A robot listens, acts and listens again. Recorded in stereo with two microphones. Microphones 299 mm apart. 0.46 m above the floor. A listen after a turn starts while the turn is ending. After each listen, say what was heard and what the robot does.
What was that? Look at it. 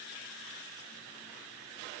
Keep listening.
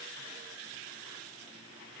Keep listening.
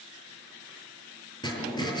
Turn 30° left.
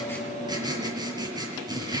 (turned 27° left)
So it is at 15° right. Turn 15° right.
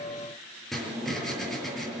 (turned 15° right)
Facing the writing.